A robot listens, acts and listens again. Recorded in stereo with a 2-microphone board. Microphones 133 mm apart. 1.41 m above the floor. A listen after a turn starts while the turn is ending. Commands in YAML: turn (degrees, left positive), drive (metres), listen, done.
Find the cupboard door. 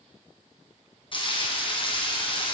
listen: true
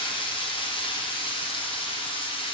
listen: true
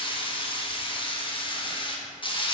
done: "I can't make out a cupboard door, only frying."